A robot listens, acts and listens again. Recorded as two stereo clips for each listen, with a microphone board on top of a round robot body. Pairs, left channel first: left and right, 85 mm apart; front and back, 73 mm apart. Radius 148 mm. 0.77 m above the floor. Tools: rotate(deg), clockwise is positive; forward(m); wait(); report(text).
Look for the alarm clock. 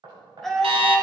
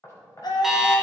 rotate(95)
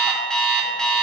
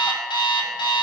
report("Facing the alarm clock, 1 to 2 m away.")